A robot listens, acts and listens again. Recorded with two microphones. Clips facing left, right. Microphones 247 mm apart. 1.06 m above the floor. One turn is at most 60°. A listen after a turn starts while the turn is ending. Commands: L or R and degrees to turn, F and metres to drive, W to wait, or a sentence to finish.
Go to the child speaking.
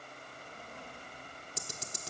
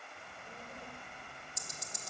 R45
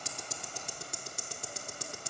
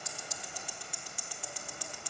W
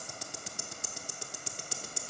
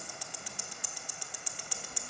R60
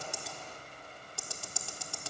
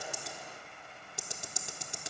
R20
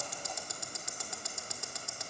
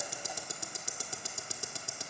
W
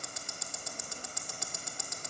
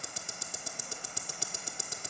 W
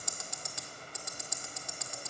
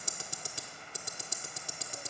I heard a child speaking from this way, but can't make it out now. I did not reach it.